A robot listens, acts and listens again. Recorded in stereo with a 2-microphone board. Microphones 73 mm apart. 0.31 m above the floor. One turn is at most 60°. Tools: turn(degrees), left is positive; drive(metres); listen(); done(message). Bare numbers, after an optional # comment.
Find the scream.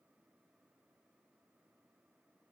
listen()
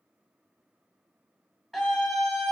turn(-30)
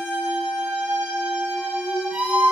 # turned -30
# So it is at 145° right.
turn(-60)
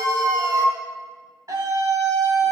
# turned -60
# The scream is now 100° right.
turn(-60)
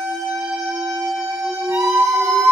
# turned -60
# The scream is now 45° right.
turn(-45)
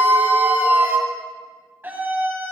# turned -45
# The scream is now 30° right.
turn(-30)
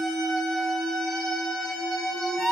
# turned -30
# The scream is now 10° left.
turn(10)
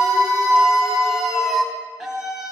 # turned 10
done("Found it: a scream, straight ahead.")